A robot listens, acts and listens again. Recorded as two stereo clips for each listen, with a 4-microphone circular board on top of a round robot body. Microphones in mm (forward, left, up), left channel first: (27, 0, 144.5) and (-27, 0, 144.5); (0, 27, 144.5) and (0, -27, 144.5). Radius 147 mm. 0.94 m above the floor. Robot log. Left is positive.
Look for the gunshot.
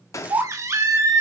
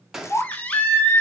end: Facing the gunshot.